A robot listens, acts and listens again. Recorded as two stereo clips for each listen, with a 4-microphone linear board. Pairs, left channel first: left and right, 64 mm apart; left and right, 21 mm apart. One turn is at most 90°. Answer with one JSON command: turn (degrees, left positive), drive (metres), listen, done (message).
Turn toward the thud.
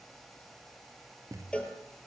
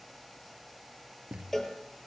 {"turn": -60}
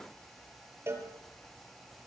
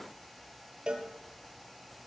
{"listen": true}
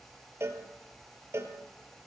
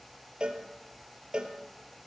{"done": "I heard a thud, but can't make it out now. It was about straight ahead or 60° right."}